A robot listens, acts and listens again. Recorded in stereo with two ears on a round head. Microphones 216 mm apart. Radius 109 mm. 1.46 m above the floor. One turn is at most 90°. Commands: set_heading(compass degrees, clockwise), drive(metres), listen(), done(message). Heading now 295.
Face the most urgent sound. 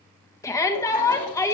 set_heading(265)
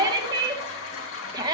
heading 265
set_heading(280)
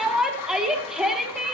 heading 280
done("Found it: a shout, straight ahead.")